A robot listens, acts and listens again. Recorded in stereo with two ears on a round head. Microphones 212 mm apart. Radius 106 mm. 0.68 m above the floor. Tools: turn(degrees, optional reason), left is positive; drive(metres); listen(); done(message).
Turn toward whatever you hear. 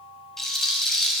turn(degrees=30)
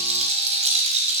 turn(degrees=-30, reason="So it is at 30° right.")
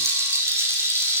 turn(degrees=-15, reason="The rattle is now 15° right.")
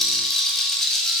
done("Found it: a rattle, straight ahead.")